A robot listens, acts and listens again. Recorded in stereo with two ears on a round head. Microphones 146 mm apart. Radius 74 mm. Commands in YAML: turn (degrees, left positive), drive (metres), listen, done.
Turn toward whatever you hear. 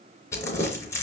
turn: 20
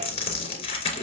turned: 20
turn: 140
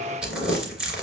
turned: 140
done: "Facing the crumpling, 2 to 4 m away."